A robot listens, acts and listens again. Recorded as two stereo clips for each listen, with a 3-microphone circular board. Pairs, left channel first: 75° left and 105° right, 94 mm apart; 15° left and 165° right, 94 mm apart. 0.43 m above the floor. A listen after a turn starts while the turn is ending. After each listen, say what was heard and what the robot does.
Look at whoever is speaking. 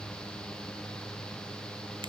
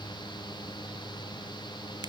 Keep listening.
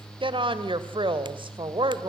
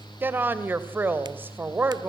The woman speaking: 100° right. Turn 100° right.
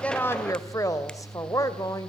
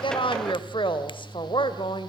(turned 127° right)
The woman speaking is now 25° left. Turn 25° left.
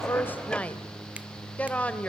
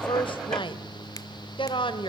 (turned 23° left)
Facing the woman speaking.